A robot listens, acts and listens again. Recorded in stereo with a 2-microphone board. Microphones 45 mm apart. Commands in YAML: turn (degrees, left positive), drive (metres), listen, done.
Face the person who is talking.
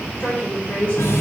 turn: 35
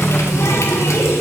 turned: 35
listen: true
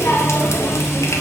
listen: true
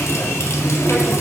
done: "I heard a woman speaking, but can't make it out now. It was about straight ahead or 110° left."